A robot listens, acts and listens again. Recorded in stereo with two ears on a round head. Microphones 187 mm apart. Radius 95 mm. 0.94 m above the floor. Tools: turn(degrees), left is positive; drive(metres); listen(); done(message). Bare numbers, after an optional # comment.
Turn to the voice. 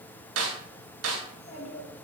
# The child speaking: about 40° left or 140° left.
turn(40)
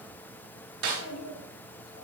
# So it is at 90° left.
turn(90)
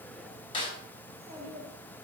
# The child speaking is now 15° right.
turn(-15)
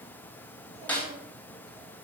listen()
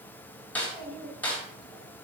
done("Facing the child speaking.")